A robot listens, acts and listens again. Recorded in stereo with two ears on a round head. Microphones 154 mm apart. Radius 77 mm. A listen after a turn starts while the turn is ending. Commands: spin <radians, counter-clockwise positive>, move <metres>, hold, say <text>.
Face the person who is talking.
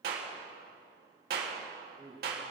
spin -0.61
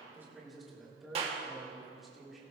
say Facing the man speaking.